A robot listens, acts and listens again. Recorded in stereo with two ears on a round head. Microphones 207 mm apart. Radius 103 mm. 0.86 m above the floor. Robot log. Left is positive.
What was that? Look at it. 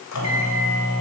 cmd yaw +90
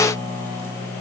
note: So it is at 10° left.
cmd yaw +10
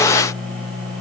end: Facing the microwave.